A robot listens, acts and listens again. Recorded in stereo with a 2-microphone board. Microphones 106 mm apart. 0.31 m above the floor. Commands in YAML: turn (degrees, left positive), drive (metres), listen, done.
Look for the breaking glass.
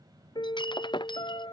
turn: 50
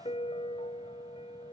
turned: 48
listen: true
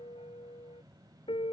done: "I heard breaking glass, but can't make it out now. It was about straight ahead or 80° left."